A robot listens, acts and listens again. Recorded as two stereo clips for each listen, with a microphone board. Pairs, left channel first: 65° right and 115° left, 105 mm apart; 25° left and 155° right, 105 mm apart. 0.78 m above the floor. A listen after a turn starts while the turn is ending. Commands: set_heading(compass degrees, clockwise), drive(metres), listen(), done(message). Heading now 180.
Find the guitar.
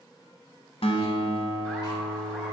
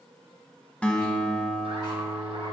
set_heading(235)
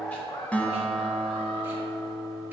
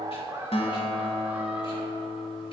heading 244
set_heading(234)
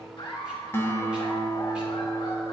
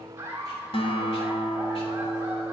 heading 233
done("Found it: a guitar, straight ahead.")